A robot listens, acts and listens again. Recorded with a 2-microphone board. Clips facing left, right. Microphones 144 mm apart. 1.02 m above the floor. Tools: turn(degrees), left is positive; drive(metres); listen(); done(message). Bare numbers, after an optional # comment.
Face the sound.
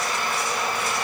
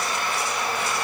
listen()
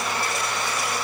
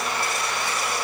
listen()
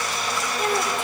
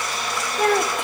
# The child speaking: about 70° right or 110° right.
turn(-70)
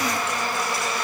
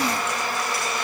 listen()
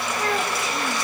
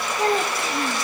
# So it is at 30° right.
turn(-30)
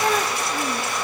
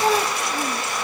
# The child speaking is now 10° right.
turn(-10)
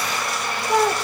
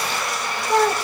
done("Facing the child speaking, 1 to 2 m away.")